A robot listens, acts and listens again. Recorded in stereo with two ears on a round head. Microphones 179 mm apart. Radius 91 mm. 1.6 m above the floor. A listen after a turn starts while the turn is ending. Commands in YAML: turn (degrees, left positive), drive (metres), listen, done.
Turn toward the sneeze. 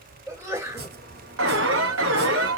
turn: -30
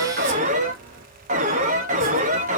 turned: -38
listen: true
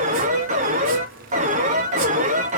done: "I heard a sneeze, but can't make it out now. It was about 25° left or 130° right."